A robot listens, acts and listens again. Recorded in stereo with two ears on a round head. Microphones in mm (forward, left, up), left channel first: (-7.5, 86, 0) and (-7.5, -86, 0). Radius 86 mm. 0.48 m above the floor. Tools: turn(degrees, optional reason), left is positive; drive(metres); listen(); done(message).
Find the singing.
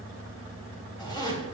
listen()
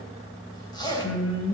turn(degrees=90)
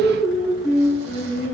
done("Facing the singing, over 4 m away.")